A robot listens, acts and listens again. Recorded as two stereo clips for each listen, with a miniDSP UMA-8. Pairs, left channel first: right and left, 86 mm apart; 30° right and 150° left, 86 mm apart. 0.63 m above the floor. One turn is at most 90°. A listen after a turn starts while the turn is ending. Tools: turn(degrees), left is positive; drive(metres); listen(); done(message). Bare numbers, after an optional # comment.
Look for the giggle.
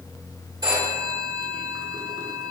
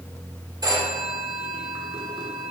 listen()
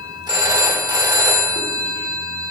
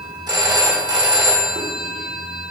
listen()
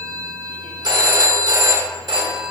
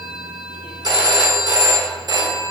done("I can't make out a giggle, only a phone ringing.")